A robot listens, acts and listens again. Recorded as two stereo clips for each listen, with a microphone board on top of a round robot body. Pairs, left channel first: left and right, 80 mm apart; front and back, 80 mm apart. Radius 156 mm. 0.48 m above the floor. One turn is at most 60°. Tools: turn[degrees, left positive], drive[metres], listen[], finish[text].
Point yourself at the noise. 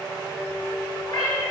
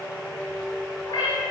Thought: The cat meowing: 45° left.
Action: turn[45]
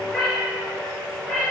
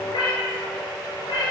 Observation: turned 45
Thought: The cat meowing is now 10° left.
Action: turn[10]
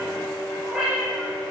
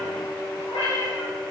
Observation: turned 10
Action: finish[Found it: a cat meowing, straight ahead.]